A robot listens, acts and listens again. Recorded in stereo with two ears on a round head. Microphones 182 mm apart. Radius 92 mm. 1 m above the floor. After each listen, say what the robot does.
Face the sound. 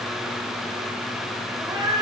Turn 20° right.
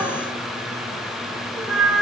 Turn 30° right.
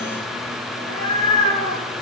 Turn 25° left.
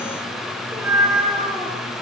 Found it: a cat meowing, straight ahead.